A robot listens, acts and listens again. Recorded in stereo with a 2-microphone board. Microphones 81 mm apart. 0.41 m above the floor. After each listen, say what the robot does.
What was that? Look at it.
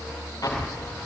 Turn 55° left.
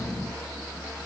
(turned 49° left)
Keep listening.
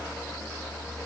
I heard an explosion, but can't make it out now. It was about 5° left or 75° left.